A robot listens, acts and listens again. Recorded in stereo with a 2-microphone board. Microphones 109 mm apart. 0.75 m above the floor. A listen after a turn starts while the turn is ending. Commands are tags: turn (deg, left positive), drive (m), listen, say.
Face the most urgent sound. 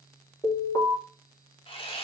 <turn deg="30"/>
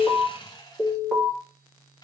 <say>Found it: an alarm, straight ahead, over 4 m away.</say>